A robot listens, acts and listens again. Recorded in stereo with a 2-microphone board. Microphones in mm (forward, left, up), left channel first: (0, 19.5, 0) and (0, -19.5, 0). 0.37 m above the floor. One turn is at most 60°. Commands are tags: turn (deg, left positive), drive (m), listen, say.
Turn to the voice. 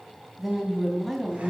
<turn deg="-30"/>
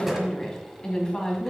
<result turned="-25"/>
<turn deg="20"/>
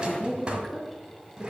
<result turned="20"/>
<say>Facing the woman speaking.</say>